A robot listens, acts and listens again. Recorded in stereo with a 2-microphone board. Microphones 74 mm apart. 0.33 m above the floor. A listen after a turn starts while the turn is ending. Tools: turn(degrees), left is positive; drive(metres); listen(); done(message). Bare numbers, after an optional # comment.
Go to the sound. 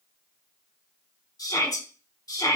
# The shout: about 65° left or 115° left.
turn(65)
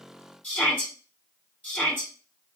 # So it is at 25° left.
turn(25)
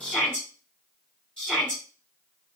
# The shout is now 15° left.
turn(15)
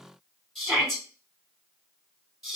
drive(1.0)
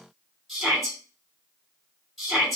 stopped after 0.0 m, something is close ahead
done("Something is in my way. I am facing the shout but have not reached it.")